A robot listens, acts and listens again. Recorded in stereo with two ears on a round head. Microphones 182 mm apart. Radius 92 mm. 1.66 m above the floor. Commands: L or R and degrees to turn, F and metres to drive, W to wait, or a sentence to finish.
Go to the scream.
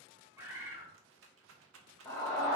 L30
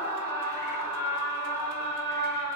R15
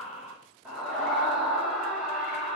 F1.0
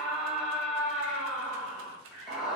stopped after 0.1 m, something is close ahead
Something is in my way. I am facing the scream but have not reached it.